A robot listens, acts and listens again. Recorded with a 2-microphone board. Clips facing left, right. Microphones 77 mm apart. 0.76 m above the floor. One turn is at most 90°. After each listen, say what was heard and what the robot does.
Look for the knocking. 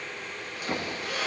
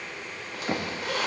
The knocking: about 20° right or 160° right. Turn 20° right.
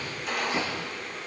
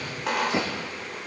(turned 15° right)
So it is at 150° right. Turn 90° right.
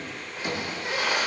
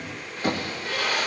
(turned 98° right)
The knocking is now 45° right. Turn 45° right.
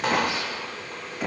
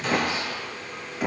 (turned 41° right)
Facing the knocking, under 1 m away.